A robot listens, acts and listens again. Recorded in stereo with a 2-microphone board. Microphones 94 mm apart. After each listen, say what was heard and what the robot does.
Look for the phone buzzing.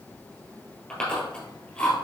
Keep listening.
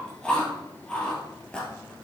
Keep listening.
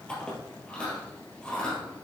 I can't make out a phone buzzing to turn to.